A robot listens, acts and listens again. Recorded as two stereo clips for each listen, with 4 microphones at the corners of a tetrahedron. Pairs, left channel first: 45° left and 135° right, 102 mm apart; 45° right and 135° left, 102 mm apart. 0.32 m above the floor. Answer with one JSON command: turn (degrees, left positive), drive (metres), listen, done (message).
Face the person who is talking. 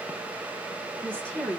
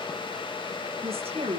{"turn": 125}
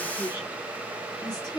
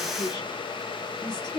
{"done": "Facing the woman speaking, over 4 m away."}